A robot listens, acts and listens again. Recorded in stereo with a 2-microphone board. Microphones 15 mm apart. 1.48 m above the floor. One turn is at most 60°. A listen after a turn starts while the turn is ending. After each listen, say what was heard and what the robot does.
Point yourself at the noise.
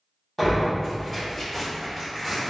Turn 30° left.
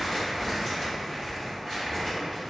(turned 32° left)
So it is at 140° left. Turn 60° left.
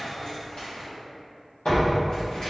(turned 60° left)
The tearing paper is now 80° left. Turn 60° left.
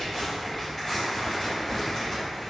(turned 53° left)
The tearing paper is now 25° left. Turn 25° left.
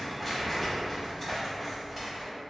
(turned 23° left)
Facing the tearing paper, 1 to 2 m away.